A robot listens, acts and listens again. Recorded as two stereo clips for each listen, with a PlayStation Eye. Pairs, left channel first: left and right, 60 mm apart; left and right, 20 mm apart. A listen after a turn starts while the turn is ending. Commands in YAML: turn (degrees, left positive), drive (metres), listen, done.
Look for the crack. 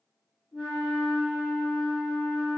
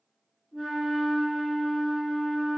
listen: true
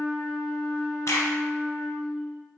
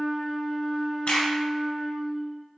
turn: 55
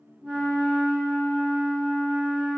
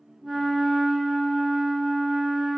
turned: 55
listen: true
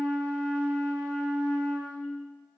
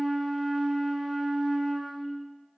done: "I heard a crack, but can't make it out now. It was about straight ahead or 70° left."